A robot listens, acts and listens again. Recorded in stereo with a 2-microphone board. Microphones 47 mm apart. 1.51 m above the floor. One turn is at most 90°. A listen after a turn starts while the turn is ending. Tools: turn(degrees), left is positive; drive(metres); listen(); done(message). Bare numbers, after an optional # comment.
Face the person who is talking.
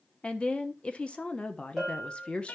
# The woman speaking: about 25° left or 155° left.
turn(25)
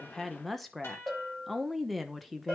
done("Facing the woman speaking, under 1 m away.")